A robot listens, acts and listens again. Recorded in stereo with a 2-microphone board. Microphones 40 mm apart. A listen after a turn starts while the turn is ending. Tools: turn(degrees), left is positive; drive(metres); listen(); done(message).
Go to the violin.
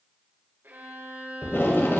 turn(degrees=-60)
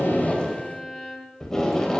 drive(metres=1.0)
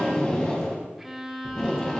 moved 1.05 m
turn(degrees=-10)
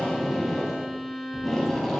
drive(metres=1.0)
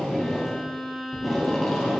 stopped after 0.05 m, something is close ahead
done("I am next to the violin.")